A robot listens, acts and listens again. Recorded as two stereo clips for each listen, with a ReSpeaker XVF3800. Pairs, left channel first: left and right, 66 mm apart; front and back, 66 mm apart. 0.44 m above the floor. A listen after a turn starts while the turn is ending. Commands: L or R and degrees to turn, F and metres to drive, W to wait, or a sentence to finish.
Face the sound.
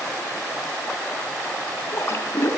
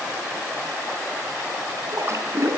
L135
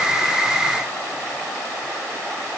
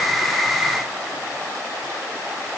Facing where the splash came from. I can't hear it now.